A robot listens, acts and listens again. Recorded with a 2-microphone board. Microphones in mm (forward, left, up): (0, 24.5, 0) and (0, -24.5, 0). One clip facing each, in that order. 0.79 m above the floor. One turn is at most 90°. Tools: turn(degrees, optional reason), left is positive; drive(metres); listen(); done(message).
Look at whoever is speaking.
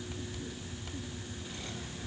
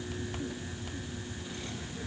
listen()
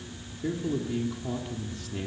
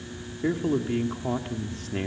turn(degrees=-45, reason="The man speaking: about 45° right or 135° right.")
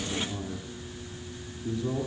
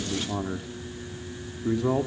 turn(degrees=-90, reason="So it is at 90° right.")
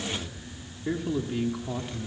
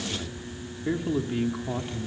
turn(degrees=-15, reason="The man speaking is now 15° right.")
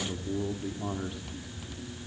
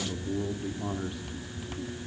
done("Found it: a man speaking, straight ahead.")